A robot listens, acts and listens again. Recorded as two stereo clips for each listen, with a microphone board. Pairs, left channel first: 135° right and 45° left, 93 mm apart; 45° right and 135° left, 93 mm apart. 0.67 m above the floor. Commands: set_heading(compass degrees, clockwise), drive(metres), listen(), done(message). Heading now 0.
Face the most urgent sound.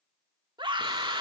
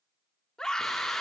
set_heading(325)
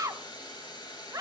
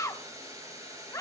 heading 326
done("Facing the scream, 1 to 2 m away.")